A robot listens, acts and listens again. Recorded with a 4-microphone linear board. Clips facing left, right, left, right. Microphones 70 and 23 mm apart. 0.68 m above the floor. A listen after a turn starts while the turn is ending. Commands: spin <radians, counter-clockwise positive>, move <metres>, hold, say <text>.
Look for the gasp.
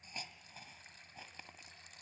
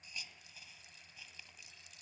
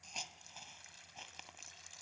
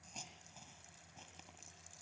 hold
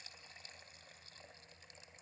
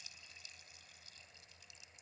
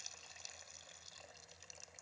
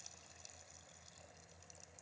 hold
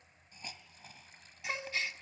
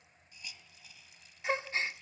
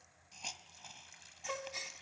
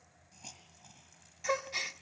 spin -0.52
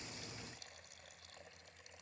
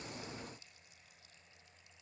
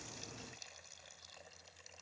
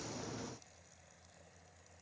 hold
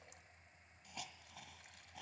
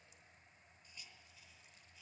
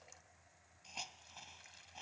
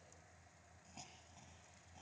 say I heard a gasp, but can't make it out now. It was about straight ahead or 120° right.